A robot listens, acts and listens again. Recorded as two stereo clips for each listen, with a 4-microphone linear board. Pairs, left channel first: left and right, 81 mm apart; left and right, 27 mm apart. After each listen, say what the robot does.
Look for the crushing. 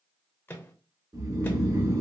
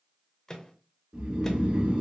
Keep listening.
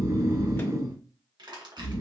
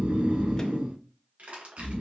Turn 65° right.
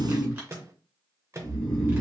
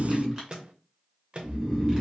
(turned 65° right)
Keep listening.
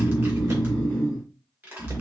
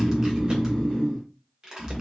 Turn 25° right.
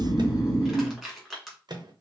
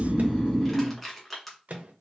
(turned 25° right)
Facing the crushing.